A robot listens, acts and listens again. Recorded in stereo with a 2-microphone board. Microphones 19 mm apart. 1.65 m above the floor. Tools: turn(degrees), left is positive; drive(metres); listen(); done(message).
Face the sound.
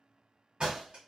turn(degrees=-55)
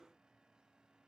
listen()
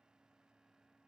done("I heard a door slam, but can't make it out now. It was about straight ahead or 70° right.")